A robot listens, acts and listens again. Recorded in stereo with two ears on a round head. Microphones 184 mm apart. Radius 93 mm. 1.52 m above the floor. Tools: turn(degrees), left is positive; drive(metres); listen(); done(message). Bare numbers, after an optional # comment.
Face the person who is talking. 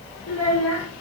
turn(90)
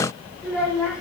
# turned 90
done("Found it: a child speaking, straight ahead.")